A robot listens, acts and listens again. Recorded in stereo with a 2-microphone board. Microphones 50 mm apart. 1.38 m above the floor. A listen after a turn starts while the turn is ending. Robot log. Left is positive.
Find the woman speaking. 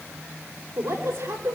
cmd yaw -90
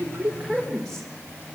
end: Found it: a woman speaking, straight ahead.